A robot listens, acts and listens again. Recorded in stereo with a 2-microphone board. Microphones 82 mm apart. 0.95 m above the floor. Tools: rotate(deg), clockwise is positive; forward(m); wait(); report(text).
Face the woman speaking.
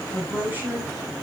rotate(25)
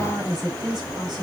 rotate(125)
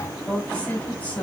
rotate(-15)
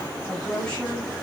rotate(-15)
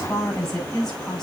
report("Found it: a woman speaking, straight ahead.")